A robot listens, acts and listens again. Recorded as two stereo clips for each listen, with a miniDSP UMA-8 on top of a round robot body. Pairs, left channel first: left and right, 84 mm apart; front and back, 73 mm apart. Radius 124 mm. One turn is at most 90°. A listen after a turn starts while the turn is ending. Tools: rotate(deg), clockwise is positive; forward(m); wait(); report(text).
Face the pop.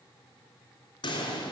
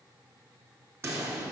rotate(-90)
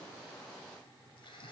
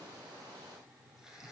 rotate(-35)
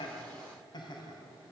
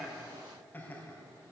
report("I heard a pop from this way, but can't make it out now.")